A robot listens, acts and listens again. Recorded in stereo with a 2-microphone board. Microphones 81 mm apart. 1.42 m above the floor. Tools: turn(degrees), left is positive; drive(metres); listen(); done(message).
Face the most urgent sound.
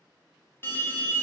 turn(degrees=30)
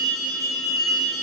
done("Facing the alarm.")